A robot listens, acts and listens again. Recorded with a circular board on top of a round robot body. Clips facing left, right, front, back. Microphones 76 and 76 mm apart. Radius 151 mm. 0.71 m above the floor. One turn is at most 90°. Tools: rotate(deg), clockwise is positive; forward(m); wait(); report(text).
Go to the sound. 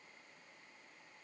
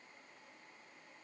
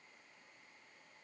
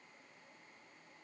wait()
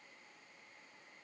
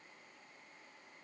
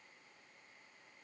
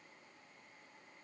wait()
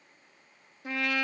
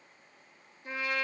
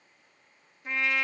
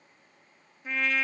rotate(-90)
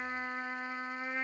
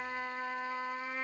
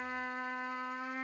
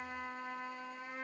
rotate(-25)
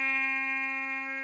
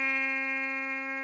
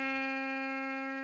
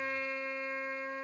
forward(1.0)
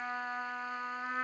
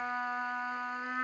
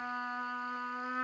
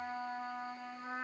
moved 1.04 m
forward(1.0)
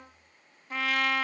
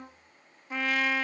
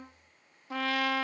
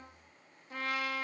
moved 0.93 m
forward(1.0)
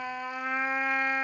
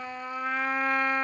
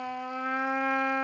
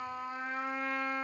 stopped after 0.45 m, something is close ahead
report("Arrived at the trumpet, straight ahead.")